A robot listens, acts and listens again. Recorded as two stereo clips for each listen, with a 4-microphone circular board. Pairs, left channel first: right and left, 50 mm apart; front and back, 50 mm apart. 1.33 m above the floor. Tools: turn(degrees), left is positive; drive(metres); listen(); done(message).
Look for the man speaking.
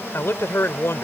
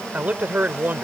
turn(degrees=-130)
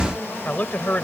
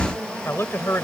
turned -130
turn(degrees=-35)
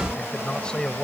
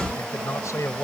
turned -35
turn(degrees=-15)
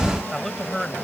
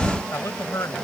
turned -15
done("Facing the man speaking.")